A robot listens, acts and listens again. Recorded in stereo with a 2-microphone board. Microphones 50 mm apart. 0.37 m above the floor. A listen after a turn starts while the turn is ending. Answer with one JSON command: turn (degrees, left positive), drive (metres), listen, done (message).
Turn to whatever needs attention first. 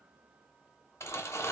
{"listen": true}
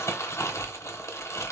{"listen": true}
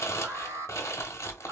{"turn": -60}
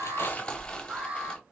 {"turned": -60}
{"turn": -35}
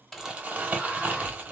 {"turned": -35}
{"listen": true}
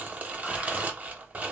{"listen": true}
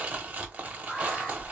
{"turn": 15}
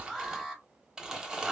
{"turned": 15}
{"done": "Facing the alarm."}